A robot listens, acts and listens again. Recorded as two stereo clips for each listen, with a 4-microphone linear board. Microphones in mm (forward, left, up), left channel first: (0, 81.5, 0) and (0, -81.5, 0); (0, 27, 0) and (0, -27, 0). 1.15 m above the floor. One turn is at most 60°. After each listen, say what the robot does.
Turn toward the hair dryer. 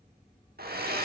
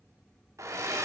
Turn 60° right.
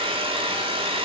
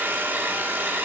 Turn 35° right.
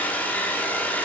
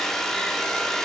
Turn 10° left.
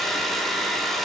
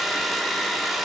Found it: a hair dryer, straight ahead, 1 to 2 m away.